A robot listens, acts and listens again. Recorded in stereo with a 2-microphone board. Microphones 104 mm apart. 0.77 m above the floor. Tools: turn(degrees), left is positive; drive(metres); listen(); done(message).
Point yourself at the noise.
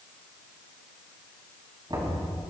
turn(degrees=-45)
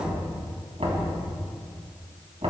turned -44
turn(degrees=-95)
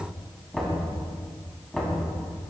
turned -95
done("Facing the knocking.")